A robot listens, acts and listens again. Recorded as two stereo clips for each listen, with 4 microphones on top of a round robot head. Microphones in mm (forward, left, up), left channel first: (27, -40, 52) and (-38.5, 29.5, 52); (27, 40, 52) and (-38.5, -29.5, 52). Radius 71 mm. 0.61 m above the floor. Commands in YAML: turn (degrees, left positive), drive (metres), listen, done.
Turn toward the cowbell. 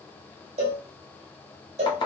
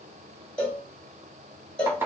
turn: 125
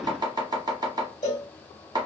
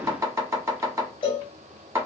done: "Facing the cowbell."